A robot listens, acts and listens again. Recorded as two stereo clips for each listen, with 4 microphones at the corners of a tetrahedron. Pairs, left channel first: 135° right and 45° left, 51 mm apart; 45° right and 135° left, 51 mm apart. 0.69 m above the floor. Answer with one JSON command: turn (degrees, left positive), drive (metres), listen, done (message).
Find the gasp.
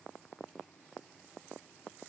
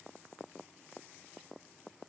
{"listen": true}
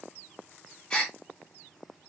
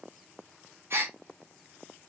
{"turn": 160}
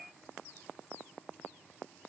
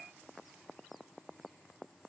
{"done": "I heard a gasp from this way, but can't make it out now."}